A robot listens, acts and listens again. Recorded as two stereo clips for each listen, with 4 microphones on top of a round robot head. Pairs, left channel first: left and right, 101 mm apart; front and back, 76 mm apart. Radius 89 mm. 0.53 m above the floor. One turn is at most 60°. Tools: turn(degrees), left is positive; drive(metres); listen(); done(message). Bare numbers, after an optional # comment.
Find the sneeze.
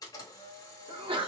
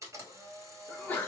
# The sneeze: 65° right.
turn(-60)
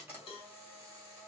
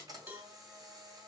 done("Facing where the sneeze came from. I can't hear it now.")